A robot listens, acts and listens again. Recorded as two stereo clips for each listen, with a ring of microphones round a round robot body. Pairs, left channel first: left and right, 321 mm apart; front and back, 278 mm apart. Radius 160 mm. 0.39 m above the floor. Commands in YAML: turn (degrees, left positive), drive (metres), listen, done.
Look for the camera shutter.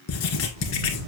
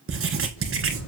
turn: -50
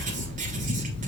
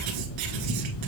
turn: 15
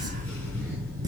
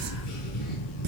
done: "Found it: a camera shutter, straight ahead, 2 to 4 m away."